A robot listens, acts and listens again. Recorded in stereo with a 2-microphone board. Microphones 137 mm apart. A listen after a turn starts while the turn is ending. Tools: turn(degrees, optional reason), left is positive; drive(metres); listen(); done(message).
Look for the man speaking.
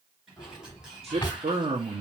turn(degrees=-45, reason="The man speaking: about 45° right or 135° right.")
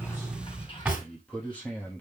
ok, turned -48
turn(degrees=15, reason="So it is at 15° left.")
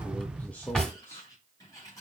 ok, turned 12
turn(degrees=20, reason="The man speaking is now 20° left.")
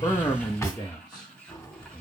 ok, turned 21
turn(degrees=30, reason="The man speaking is now 30° left.")
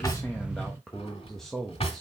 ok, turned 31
done("Found it: a man speaking, straight ahead.")